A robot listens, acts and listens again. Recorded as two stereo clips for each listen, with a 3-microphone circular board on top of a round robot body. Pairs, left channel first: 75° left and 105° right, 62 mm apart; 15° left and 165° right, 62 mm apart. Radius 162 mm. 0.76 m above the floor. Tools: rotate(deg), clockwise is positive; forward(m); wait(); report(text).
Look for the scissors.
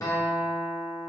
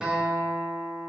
wait()
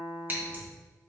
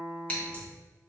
rotate(50)
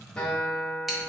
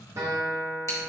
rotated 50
wait()
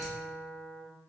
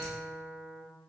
wait()
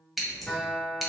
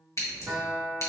rotate(20)
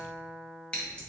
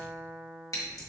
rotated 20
report("Facing the scissors.")